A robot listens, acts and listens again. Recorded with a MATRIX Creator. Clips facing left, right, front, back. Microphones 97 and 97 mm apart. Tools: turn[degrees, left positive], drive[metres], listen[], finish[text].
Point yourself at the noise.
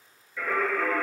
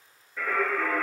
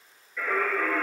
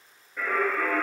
Thought: The singing: 135° right.
Action: turn[-135]
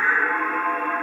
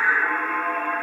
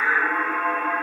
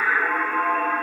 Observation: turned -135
Thought: The singing is now 25° left.
Action: turn[25]
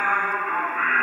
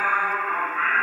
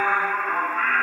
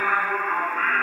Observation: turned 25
Thought: The singing is now 20° left.
Action: turn[20]
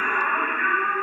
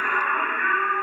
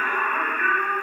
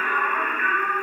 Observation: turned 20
Thought: The singing is now 20° left.
Action: turn[20]
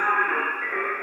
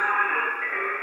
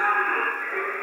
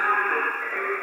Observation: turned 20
Thought: The singing is now 15° left.
Action: turn[15]
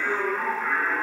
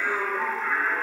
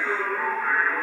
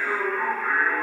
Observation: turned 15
Action: finish[Found it: singing, straight ahead, 1 to 2 m away.]